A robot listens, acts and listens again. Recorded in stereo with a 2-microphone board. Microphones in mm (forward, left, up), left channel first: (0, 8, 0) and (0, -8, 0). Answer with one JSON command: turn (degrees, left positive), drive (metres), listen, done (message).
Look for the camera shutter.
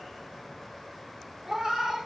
{"listen": true}
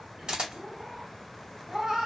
{"turn": -50}
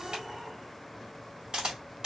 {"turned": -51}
{"turn": -65}
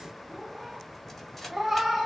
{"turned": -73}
{"turn": 10}
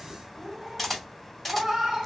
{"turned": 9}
{"done": "Found it: a camera shutter, straight ahead, 1 to 2 m away."}